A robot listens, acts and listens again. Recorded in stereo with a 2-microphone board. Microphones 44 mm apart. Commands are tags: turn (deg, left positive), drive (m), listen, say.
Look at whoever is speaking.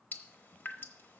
<listen/>
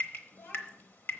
<turn deg="70"/>
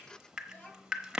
<turn deg="35"/>
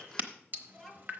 <say>Facing the child speaking, 2 to 4 m away.</say>